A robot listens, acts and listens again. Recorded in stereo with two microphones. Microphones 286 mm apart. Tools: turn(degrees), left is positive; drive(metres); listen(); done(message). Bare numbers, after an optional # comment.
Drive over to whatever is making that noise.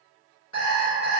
turn(90)
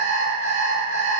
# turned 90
# So it is at 10° right.
turn(-10)
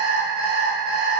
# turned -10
drive(1.0)
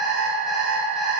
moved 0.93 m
drive(1.0)
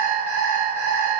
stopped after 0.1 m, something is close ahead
done("Arrived at the alarm clock, straight ahead.")